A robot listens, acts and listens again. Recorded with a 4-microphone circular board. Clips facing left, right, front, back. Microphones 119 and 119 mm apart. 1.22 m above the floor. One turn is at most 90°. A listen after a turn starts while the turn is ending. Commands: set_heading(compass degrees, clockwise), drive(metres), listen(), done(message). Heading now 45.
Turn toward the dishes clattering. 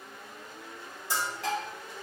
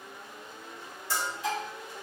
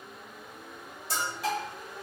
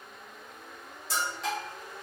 set_heading(320)
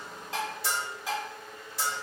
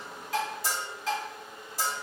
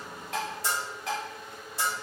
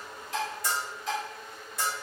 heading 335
set_heading(325)
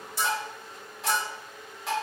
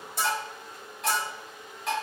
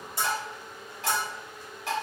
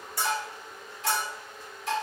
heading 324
done("Found it: dishes clattering, straight ahead.")